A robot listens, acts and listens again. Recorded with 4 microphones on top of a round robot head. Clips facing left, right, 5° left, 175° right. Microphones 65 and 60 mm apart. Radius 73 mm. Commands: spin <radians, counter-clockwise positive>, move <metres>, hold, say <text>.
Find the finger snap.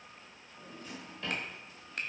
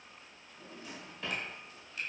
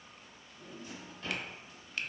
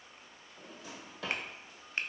spin 2.18
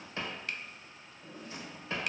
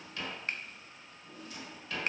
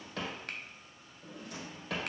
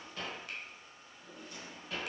spin -0.52
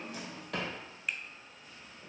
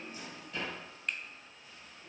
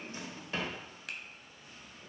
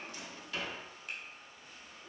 say Found it: a finger snap, straight ahead.